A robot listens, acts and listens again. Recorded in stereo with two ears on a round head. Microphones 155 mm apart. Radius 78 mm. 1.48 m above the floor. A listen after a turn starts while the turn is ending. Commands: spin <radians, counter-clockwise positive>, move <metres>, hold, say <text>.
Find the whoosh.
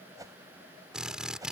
spin -0.35
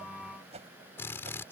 spin -2.44
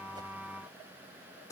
hold
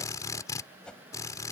say Facing the whoosh.